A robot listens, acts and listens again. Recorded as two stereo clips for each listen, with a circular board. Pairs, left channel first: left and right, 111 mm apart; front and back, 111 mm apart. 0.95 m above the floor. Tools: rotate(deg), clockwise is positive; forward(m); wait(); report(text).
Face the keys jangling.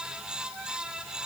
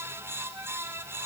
wait()
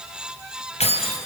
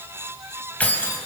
rotate(-75)
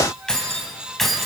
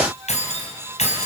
report("Facing the keys jangling, over 4 m away.")